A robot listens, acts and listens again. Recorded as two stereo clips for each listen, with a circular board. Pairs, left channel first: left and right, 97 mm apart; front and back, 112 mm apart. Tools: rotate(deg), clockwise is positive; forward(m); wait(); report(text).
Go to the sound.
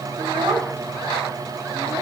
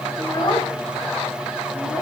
rotate(50)
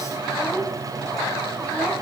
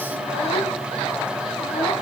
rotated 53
wait()
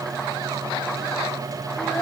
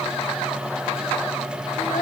wait()
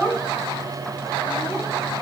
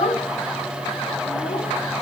forward(1.0)
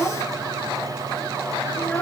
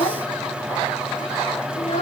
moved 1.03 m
rotate(-15)
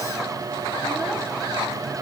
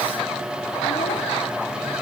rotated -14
wait()
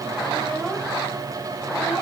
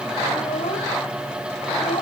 forward(1.0)
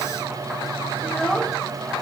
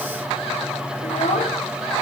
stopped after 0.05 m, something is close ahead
report("Arrived at the child speaking, straight ahead.")